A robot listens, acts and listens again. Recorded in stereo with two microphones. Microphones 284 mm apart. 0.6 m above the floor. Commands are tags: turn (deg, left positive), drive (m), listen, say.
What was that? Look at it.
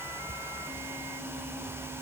<listen/>
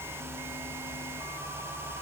<listen/>
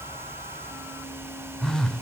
<turn deg="30"/>
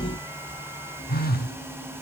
<turn deg="145"/>
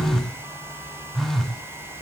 <say>Found it: a phone buzzing, straight ahead.</say>